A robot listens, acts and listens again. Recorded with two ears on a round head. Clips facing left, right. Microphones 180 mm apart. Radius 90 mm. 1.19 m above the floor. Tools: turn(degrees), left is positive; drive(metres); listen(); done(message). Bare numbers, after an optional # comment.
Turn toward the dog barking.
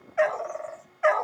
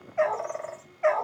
turn(30)
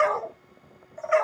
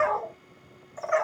# So it is at 140° left.
turn(140)
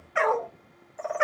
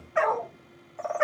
# The dog barking is now 35° left.
turn(35)
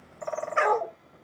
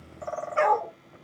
# The dog barking is now 20° left.
turn(20)
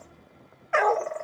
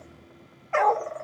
# The dog barking is now 15° left.
turn(15)
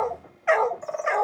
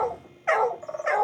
done("Facing the dog barking.")